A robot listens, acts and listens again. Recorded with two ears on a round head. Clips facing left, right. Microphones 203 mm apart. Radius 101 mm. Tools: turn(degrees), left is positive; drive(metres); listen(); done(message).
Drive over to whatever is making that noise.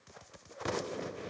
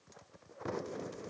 listen()
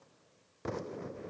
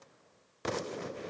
listen()
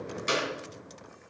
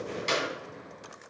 turn(degrees=30)
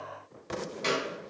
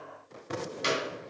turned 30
turn(degrees=-15)
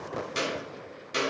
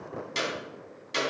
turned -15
drive(metres=1.0)
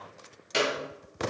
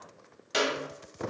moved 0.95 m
drive(metres=1.0)
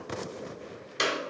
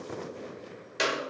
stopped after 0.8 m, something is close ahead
done("I am next to the clap.")